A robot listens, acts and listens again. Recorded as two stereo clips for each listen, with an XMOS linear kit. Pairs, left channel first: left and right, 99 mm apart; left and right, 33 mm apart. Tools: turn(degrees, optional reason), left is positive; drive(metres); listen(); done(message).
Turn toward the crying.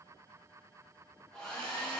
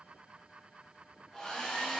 listen()
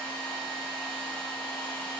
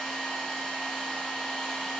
listen()
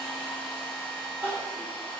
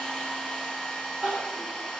turn(degrees=-30, reason="The crying: about 30° right or 150° right.")
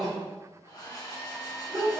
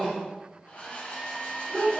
done("Facing the crying, 1 to 2 m away.")